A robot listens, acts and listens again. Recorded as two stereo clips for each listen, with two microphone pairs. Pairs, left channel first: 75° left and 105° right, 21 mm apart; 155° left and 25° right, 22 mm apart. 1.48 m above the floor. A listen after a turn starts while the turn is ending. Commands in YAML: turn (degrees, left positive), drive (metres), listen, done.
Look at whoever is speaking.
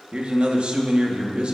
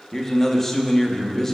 turn: -130
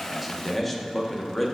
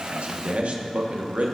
turn: -10
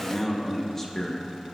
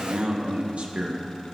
done: "Found it: a man speaking, straight ahead, 1 to 2 m away."